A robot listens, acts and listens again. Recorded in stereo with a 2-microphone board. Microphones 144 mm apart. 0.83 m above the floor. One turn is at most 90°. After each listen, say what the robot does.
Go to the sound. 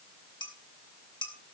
Turn 35° left.
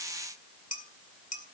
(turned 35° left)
Turn 90° left.
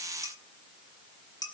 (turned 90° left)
Turn 25° left.
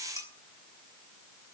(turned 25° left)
Keep listening.
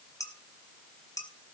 Turn 25° left.
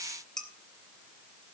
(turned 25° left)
Drive 1.0 m forward.
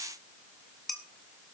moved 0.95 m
Drive 1.0 m forward.
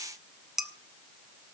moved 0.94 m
Drive 1.0 m forward.
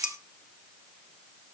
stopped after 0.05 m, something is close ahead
I am next to the dishes clattering.